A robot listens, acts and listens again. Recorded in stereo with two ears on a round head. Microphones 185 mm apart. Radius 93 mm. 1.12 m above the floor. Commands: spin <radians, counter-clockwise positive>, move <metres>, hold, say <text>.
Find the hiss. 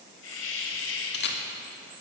spin 1.22
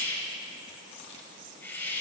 spin 0.17
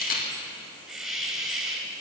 say Found it: a hiss, straight ahead.